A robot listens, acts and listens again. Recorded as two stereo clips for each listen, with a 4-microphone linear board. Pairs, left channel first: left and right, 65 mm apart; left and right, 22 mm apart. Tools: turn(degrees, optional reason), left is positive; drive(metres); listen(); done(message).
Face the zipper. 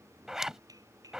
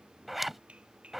turn(degrees=-30)
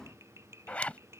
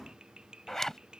turn(degrees=25, reason="So it is at 25° left.")
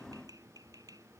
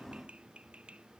listen()
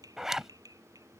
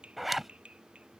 done("Found it: a zipper, straight ahead.")